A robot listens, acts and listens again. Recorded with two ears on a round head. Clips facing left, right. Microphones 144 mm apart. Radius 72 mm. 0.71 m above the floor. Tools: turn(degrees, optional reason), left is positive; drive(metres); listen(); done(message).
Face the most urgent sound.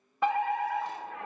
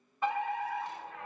turn(degrees=55, reason="The fire alarm: about 55° left or 125° left.")
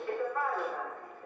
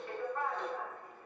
turn(degrees=60, reason="So it is at 60° left.")
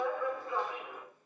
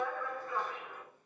turn(degrees=15, reason="The fire alarm is now 15° left.")
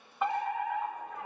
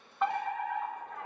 done("Facing the fire alarm, 2 to 4 m away.")